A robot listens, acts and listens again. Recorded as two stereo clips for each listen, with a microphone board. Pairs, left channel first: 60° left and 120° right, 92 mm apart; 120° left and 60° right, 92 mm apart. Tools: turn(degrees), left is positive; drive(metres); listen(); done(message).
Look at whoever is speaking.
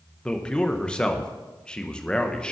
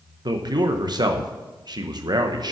turn(degrees=-20)
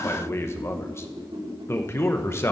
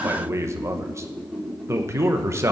done("Facing the man speaking, 1 to 2 m away.")